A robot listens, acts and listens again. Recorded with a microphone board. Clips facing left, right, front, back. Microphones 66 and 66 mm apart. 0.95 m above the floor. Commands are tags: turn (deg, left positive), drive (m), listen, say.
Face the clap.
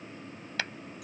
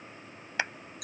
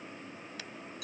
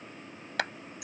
<turn deg="-160"/>
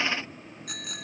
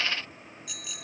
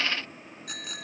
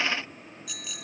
<listen/>
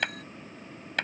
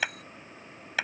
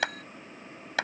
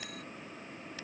<say>Facing the clap.</say>